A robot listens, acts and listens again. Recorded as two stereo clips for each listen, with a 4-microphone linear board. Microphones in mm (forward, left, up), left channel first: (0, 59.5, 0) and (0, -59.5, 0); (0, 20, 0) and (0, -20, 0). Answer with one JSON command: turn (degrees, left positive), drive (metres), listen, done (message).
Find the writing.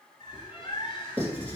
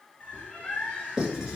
{"turn": -15}
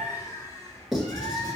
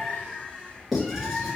{"done": "Facing the writing, 1 to 2 m away."}